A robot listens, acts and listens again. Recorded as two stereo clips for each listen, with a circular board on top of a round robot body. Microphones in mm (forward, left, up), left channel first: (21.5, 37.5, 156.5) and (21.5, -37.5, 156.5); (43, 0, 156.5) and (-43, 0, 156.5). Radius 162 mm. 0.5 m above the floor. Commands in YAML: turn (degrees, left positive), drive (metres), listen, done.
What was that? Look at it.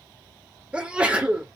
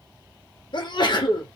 turn: -15
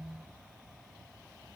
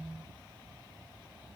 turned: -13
done: "I heard a sneeze from this way, but can't make it out now."